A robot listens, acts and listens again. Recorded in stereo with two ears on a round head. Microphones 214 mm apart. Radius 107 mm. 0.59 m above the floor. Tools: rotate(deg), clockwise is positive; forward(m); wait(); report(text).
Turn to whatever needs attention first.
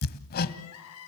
rotate(-75)
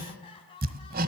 rotate(-20)
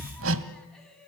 report("Found it: crying, straight ahead, over 4 m away.")